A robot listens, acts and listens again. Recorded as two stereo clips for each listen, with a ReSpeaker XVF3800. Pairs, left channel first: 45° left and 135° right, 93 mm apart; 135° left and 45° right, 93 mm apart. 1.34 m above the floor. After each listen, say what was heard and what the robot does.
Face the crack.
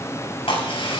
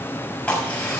The crack: 60° left. Turn 60° left.
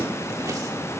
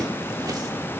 I heard a crack from this way, but can't make it out now.